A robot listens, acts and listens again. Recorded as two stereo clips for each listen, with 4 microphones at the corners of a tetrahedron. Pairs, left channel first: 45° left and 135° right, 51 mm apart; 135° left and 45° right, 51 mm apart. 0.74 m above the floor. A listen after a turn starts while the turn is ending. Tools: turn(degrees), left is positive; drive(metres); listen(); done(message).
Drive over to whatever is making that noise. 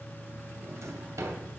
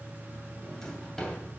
turn(degrees=-145)
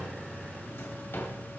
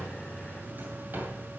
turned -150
drive(metres=1.0)
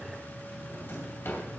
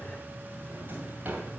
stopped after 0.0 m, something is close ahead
done("Something is in my way. I am facing the drawer but have not reached it.")